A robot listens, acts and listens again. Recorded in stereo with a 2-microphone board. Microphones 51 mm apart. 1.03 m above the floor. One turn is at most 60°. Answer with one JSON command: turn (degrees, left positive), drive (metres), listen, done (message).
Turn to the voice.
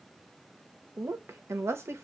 {"turn": -55}
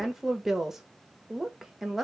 {"turn": -10}
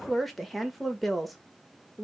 {"done": "Facing the woman speaking, under 1 m away."}